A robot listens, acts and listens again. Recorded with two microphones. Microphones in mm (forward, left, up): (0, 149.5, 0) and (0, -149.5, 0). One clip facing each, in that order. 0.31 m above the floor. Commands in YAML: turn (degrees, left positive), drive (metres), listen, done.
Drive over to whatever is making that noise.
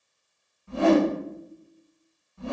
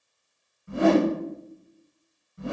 turn: -20
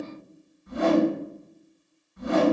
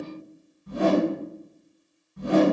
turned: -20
turn: -140
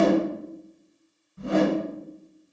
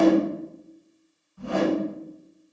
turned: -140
turn: 25
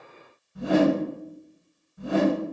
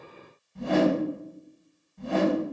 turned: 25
turn: 10
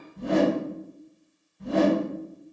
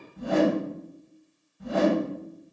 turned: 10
drive: 1.0
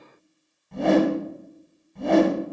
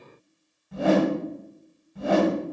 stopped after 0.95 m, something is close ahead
done: "Arrived at the whoosh, straight ahead."